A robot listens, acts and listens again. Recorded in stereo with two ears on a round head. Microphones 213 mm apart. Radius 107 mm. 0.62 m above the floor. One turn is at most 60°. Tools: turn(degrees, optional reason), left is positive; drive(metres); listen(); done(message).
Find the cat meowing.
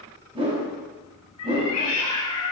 turn(degrees=60, reason="The cat meowing: about 75° left or 105° left.")
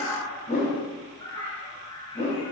turn(degrees=15, reason="So it is at 15° left.")
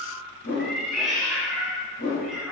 done("Found it: a cat meowing, straight ahead, 2 to 4 m away.")